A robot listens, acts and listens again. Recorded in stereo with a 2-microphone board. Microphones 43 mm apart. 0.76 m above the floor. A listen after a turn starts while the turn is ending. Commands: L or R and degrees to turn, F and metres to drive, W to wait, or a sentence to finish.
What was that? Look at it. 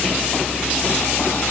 W
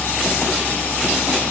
W
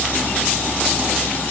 I can't make out anything to turn to.